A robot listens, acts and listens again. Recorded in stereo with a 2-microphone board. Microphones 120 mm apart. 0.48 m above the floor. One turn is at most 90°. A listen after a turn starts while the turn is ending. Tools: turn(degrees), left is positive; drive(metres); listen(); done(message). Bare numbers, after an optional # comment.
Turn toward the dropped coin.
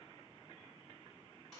listen()
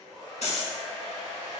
# The dropped coin: about 70° left or 110° left.
turn(70)
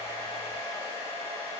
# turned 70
listen()
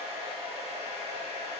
done("I heard a dropped coin, but can't make it out now. It was about straight ahead or 40° left.")